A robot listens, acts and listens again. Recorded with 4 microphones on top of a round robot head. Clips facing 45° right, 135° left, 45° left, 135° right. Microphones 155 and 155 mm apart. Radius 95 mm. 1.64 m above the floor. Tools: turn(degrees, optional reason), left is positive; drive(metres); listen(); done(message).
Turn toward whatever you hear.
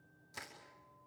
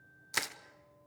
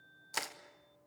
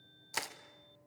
turn(degrees=135, reason="The crushing: 135° left.")
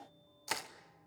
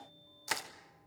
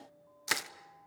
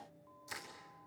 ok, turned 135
turn(degrees=45, reason="The crushing is now 45° left.")
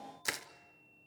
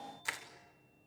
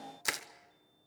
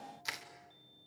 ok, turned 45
done("Facing the crushing.")